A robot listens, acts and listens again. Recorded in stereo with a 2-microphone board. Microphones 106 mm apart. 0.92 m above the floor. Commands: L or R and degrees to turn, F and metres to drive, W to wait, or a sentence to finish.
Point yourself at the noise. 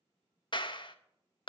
L50
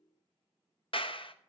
L70
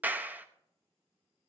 R20
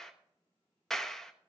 Found it: a clap, straight ahead.